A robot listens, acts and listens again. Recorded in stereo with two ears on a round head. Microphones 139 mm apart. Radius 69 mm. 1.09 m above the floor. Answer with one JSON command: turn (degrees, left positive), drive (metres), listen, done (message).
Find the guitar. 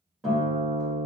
{"turn": -30}
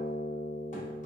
{"turn": 30}
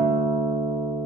{"done": "Facing the guitar."}